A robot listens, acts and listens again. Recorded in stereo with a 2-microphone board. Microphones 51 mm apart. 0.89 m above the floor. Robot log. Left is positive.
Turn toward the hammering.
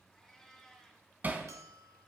note: The hammering: about 35° right or 145° right.
cmd yaw -35
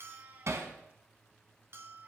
note: So it is at 110° right.
cmd yaw -110
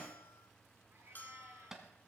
note: The hammering is now 10° right.
cmd yaw -10
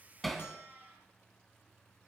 end: Facing the hammering, 1 to 2 m away.